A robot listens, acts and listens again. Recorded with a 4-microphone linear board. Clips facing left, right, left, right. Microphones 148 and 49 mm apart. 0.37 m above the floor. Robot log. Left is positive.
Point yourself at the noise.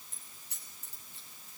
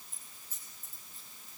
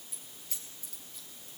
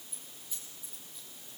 cmd yaw +90
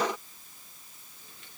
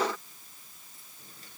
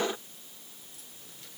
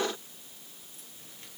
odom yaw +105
note: Nothing new. It was at 15° right.
cmd yaw -15
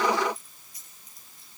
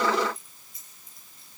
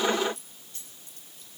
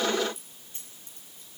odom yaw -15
note: The keys jangling is now 25° right.
cmd yaw -25
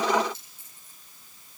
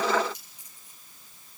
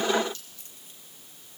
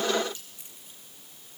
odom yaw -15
note: The keys jangling is now 15° right.
cmd yaw -15
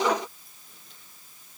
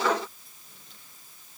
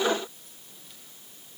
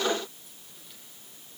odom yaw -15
cmd idle
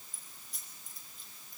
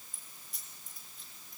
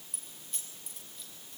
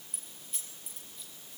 end: Facing the keys jangling.